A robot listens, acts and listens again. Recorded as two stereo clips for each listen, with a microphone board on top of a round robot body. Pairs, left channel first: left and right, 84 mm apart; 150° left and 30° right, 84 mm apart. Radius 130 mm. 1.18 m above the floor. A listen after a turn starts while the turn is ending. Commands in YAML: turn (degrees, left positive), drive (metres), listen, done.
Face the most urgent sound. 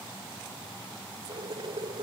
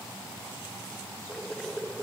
listen: true
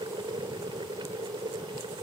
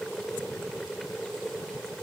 listen: true
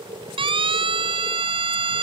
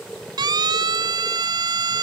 turn: -70
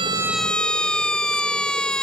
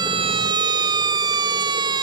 turn: 10
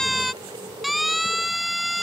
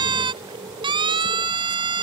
done: "Found it: a siren, straight ahead."